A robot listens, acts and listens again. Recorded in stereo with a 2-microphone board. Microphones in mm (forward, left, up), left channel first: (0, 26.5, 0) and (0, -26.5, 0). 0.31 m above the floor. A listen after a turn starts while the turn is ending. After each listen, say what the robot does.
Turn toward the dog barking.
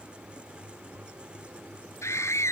Keep listening.
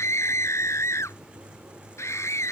Keep listening.
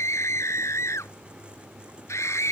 I can't make out a dog barking, only a scream.